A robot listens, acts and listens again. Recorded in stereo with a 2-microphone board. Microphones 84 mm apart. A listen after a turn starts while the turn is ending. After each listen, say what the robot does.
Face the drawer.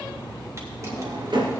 Turn 70° right.
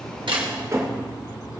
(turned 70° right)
Turn 40° right.
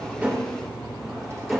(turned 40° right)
Found it: a drawer, straight ahead, 2 to 4 m away.